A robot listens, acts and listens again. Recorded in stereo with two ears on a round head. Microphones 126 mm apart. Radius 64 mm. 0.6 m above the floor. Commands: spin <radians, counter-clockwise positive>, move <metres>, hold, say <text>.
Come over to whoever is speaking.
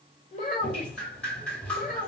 spin 0.87
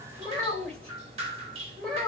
move 1.0
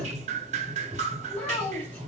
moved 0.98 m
spin 0.26
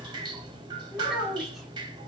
move 1.0
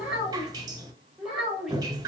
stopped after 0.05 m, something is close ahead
say Arrived at the child speaking, straight ahead.